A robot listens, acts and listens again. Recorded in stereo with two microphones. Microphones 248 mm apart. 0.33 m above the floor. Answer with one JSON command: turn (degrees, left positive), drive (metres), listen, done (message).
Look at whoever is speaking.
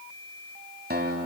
{"listen": true}
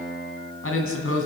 {"turn": 60}
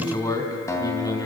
{"turn": 15}
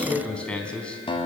{"done": "Facing the man speaking."}